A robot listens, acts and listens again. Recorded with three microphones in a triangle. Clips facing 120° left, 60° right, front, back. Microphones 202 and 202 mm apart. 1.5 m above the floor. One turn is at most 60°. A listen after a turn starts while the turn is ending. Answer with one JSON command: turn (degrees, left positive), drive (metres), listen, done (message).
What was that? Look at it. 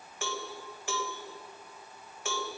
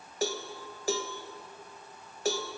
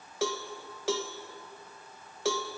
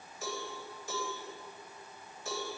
{"turn": -10}
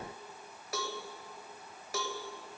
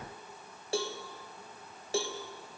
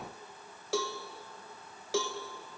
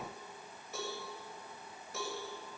{"done": "Found it: a cowbell, straight ahead."}